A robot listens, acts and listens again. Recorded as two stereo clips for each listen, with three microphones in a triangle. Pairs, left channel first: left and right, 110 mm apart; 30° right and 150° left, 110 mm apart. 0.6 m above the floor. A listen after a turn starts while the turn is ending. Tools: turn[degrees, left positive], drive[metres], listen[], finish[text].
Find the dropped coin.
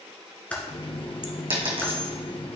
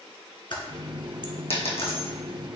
Thought: The dropped coin: 55° right.
Action: turn[-55]
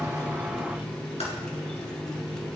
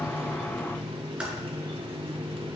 Action: finish[I heard a dropped coin from this way, but can't make it out now.]